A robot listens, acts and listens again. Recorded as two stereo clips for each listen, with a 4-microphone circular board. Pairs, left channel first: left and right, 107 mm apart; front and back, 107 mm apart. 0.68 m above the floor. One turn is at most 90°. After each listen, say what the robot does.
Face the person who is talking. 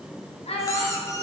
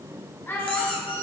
Turn 70° left.
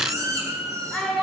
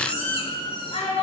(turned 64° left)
Facing the child speaking, 2 to 4 m away.